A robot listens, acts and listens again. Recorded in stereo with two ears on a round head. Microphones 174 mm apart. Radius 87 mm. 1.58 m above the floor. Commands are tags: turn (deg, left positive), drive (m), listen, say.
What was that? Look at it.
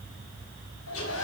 <turn deg="75"/>
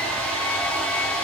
<say>Found it: a hair dryer, straight ahead, over 4 m away.</say>